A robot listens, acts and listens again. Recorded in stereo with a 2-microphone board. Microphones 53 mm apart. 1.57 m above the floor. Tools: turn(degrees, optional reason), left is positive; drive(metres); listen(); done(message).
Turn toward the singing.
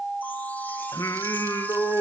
turn(degrees=90)
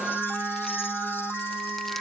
listen()
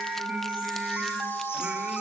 listen()
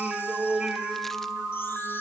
turn(degrees=-20, reason="The singing is now 20° right.")
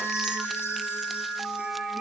listen()
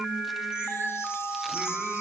turn(degrees=-10, reason="The singing is now 10° right.")
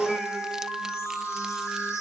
done("Found it: singing, straight ahead.")